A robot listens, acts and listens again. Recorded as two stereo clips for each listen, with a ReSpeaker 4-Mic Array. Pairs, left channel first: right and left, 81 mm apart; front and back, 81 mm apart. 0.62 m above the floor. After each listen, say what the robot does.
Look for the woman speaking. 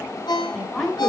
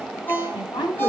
Found it: a woman speaking, straight ahead, over 4 m away.